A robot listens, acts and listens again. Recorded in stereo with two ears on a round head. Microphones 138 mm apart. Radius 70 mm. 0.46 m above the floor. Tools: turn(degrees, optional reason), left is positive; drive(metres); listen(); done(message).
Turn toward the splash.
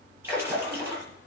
turn(degrees=-30)
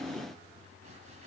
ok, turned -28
listen()
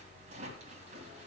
done("I heard a splash, but can't make it out now. It was about 15° left or 135° right.")